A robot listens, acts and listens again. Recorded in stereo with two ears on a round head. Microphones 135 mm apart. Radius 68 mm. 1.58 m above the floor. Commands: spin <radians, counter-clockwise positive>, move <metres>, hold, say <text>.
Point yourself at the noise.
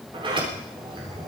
spin -0.61
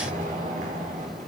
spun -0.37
spin -2.18
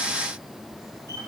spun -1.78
spin -0.44
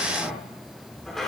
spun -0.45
say Facing the sliding door.